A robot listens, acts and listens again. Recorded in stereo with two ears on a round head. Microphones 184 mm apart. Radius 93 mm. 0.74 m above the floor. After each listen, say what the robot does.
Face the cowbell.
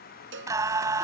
Turn 65° right.
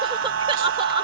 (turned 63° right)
Keep listening.
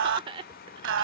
Keep listening.
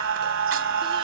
I heard a cowbell, but can't make it out now. It was about 5° right or 50° right.